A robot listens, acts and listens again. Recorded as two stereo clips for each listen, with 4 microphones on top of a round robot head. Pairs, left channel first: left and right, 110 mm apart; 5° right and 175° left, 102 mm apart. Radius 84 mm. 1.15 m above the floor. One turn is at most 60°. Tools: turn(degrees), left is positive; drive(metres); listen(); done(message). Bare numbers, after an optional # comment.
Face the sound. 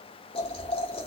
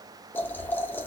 # The boiling: 60° left.
turn(60)
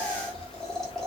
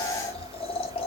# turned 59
done("Found it: boiling, straight ahead, 1 to 2 m away.")